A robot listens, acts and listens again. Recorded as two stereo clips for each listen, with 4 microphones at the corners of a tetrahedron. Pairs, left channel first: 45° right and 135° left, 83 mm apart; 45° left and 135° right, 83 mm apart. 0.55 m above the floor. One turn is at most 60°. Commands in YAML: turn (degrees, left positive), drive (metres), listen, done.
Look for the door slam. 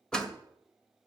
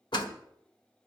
turn: 35
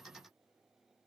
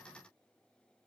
done: "I heard a door slam from this way, but can't make it out now."